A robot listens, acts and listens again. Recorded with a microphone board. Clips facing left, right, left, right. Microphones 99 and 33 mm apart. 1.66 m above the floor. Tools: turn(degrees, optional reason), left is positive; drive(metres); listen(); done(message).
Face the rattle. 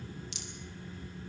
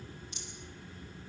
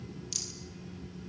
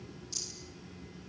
turn(degrees=90)
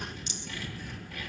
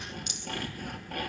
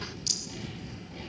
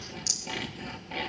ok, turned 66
turn(degrees=35, reason="So it is at 35° left.")
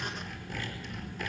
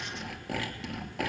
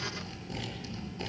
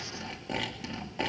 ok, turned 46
turn(degrees=-15, reason="Nothing new. It was at 15° right.")
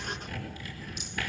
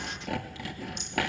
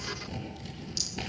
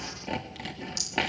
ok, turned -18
listen()
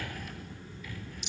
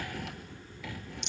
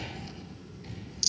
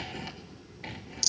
done("Facing the rattle, 2 to 4 m away.")